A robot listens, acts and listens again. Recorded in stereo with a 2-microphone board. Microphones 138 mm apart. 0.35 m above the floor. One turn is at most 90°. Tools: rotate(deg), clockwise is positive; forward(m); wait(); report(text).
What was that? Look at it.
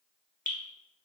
rotate(-90)
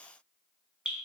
report("Facing the dripping, under 1 m away.")